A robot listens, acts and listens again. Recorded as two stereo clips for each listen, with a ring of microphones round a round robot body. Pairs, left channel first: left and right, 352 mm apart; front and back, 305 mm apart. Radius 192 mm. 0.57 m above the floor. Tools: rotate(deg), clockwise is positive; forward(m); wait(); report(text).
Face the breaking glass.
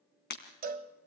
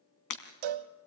rotate(-25)
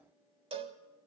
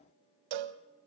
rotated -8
rotate(-15)
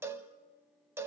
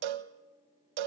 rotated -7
rotate(-10)
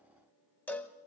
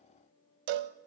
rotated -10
report("I heard breaking glass from this way, but can't make it out now.")